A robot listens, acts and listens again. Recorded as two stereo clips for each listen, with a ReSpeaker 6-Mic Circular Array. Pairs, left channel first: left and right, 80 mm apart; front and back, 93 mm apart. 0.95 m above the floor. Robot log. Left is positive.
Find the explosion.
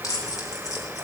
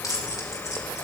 cmd idle
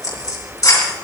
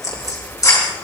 cmd idle
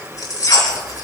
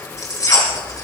end: I can't make out an explosion to turn to.